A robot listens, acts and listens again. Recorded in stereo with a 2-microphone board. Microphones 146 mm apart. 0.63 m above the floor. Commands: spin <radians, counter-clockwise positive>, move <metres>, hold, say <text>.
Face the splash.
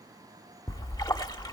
spin 0.44
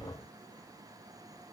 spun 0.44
hold
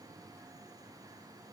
say I heard a splash, but can't make it out now. It was about straight ahead or 130° left.